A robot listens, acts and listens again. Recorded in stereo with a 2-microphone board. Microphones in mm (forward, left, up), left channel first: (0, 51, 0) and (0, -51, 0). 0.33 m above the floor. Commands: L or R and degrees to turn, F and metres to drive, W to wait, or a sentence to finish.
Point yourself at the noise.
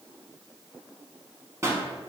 R30
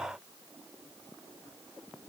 W
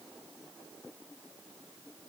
I heard a pop, but can't make it out now. It was about straight ahead or 120° right.